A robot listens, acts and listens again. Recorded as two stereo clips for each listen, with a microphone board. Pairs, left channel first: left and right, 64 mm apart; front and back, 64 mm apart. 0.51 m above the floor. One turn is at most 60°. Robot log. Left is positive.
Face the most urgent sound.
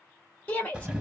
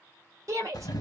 note: The shout: 155° left.
cmd yaw +60
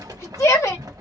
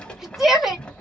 note: The shout is now 95° left.
cmd yaw +60
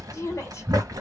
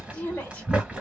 note: The shout is now 65° left.
cmd yaw +60
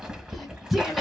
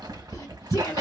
end: Facing the shout, 1 to 2 m away.